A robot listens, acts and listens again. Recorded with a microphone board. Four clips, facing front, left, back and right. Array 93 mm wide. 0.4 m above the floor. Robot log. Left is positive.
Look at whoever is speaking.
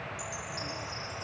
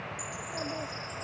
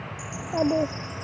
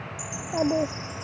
note: The child speaking: 140° right.
cmd yaw -140
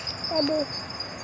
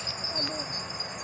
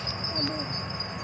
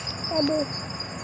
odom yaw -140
note: The child speaking is now 40° right.
cmd yaw -40
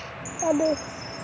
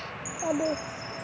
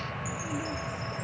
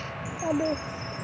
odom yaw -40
end: Found it: a child speaking, straight ahead.